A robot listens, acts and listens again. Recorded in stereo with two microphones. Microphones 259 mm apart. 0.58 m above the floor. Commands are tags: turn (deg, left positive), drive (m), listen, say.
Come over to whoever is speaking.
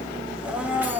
<listen/>
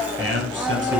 <turn deg="-50"/>
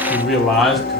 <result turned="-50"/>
<drive m="1.0"/>
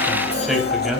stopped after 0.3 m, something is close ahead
<say>Blocked. The man speaking is further on, straight ahead.</say>